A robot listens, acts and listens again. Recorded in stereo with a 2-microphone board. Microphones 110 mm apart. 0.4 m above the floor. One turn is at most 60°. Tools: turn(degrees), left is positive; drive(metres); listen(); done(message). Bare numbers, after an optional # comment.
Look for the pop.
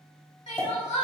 # The pop: about 20° left or 160° left.
turn(20)
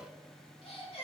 listen()
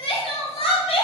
done("I heard a pop, but can't make it out now. It was about straight ahead or 140° left.")